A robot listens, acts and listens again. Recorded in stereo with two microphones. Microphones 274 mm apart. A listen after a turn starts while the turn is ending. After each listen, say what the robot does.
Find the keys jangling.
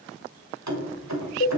Turn 75° right.
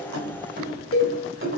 Turn 50° right.
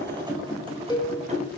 Turn 25° right.
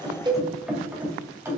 Turn 10° right.
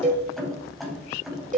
Found it: keys jangling, straight ahead.